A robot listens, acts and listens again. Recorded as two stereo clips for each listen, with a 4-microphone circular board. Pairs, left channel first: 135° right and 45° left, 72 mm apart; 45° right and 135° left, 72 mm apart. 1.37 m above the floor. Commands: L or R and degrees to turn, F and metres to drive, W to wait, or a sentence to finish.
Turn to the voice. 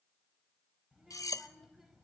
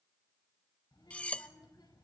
R40
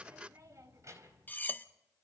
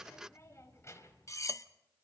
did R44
Found it: a child speaking, straight ahead.